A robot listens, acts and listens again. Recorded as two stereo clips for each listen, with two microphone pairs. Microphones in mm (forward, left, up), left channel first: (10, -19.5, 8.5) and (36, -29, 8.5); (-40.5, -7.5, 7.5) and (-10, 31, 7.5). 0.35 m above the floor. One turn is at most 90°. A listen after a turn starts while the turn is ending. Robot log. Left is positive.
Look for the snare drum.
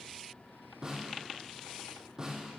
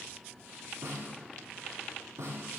note: The snare drum: 45° left.
cmd yaw +45
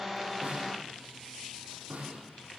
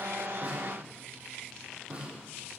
note: The snare drum is now 10° right.
cmd yaw -10
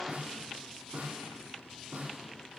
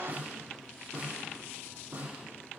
end: Found it: a snare drum, straight ahead.